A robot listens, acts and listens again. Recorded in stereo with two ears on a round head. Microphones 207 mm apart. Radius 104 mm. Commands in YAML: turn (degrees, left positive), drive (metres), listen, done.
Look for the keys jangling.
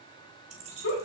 turn: -30
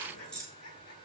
done: "Facing the keys jangling, 2 to 4 m away."